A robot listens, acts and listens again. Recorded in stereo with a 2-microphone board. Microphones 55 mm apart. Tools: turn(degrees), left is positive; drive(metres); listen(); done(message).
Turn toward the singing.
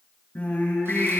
turn(degrees=30)
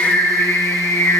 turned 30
turn(degrees=125)
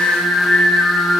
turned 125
turn(degrees=30)
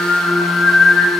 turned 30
turn(degrees=30)
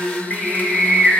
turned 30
turn(degrees=10)
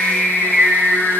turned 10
done("Found it: singing, straight ahead.")